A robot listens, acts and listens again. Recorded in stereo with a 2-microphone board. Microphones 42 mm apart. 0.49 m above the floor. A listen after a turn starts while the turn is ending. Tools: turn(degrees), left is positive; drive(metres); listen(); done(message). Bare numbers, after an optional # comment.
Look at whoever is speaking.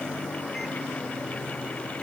listen()
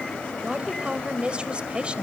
# The woman speaking: about 25° right or 155° right.
turn(-25)
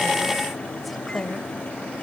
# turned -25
done("Found it: a woman speaking, straight ahead, 1 to 2 m away.")